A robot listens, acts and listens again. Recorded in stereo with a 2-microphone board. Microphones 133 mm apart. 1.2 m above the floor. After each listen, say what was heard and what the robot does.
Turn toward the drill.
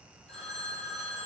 Keep listening.
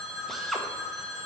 Turn 30° left.
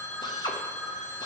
So it is at 145° left. Turn 145° left.
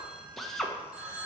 Found it: a drill, straight ahead, 1 to 2 m away.